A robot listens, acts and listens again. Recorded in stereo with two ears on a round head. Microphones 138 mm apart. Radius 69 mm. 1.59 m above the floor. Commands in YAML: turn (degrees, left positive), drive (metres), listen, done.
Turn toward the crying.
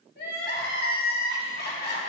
turn: 70
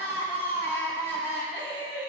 turn: 15
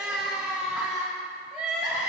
done: "Facing the crying."